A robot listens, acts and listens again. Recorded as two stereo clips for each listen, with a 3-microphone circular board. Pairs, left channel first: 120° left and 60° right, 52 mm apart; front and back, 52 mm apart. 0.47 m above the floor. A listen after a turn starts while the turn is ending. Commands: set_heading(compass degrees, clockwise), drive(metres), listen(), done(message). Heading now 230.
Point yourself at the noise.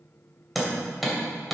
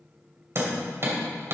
set_heading(15)
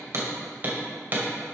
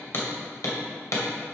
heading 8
done("Facing the hammering.")